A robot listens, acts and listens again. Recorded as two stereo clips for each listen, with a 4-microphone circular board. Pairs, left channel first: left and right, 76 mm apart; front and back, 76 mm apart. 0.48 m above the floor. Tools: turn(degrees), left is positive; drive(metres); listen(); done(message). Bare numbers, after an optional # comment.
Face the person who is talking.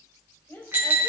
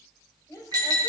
# The woman speaking: 40° left.
turn(40)
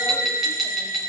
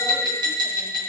listen()
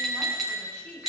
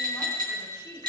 # The woman speaking is now 30° left.
turn(30)
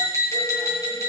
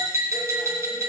listen()
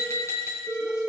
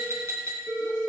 listen()
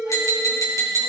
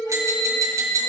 done("I heard a woman speaking from this way, but can't make it out now.")